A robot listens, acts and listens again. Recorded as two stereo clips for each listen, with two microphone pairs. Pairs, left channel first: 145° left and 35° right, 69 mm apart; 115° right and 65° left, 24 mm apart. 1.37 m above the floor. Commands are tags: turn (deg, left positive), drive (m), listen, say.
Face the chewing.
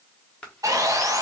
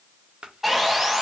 <listen/>
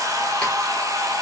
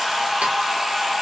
<listen/>
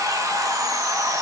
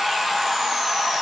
<say>I can't make out chewing to turn to.</say>